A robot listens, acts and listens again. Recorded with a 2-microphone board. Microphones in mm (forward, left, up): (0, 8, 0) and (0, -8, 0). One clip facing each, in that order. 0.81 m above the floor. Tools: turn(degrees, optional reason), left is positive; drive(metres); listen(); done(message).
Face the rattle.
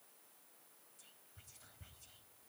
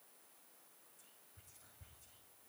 listen()
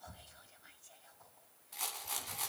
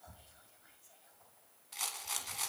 turn(degrees=-30, reason="The rattle: about 30° right or 150° right.")
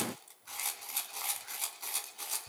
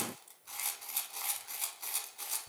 done("Facing the rattle.")